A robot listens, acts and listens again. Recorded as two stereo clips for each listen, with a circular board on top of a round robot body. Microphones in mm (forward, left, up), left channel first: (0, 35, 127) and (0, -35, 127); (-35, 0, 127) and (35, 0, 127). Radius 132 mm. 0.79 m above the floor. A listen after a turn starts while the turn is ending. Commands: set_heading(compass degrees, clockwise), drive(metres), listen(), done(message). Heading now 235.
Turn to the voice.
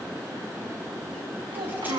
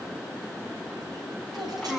set_heading(330)
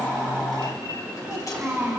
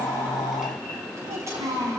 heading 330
set_heading(350)
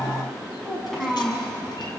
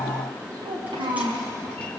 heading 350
done("Facing the child speaking, over 4 m away.")